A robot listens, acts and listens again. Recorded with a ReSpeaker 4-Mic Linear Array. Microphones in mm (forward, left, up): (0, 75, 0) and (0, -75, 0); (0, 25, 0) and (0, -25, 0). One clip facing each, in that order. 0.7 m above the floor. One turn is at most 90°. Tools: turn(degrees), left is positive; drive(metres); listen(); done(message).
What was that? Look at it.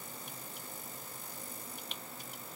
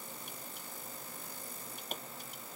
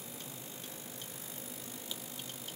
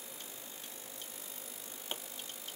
turn(degrees=-45)
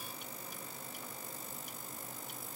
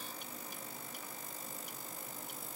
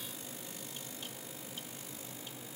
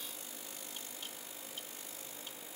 listen()
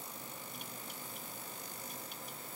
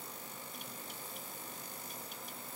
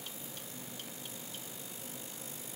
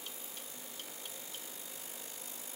done("I heard a pop, but can't make it out now. It was about straight ahead or 90° right.")